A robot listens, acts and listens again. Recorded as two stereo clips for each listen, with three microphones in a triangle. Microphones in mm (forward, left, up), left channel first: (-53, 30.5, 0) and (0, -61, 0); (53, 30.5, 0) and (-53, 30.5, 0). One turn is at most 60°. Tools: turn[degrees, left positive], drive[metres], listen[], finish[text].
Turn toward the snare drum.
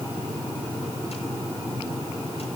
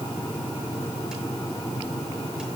Action: listen[]
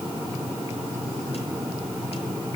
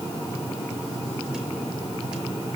Action: listen[]
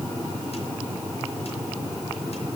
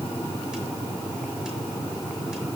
Action: finish[I can't make out a snare drum.]